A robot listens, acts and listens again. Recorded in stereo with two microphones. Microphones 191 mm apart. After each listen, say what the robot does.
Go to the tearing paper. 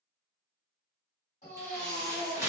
Turn 15° right.
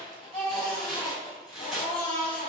Drive 1.0 m forward.
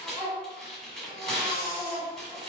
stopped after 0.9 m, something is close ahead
Arrived at the tearing paper, straight ahead.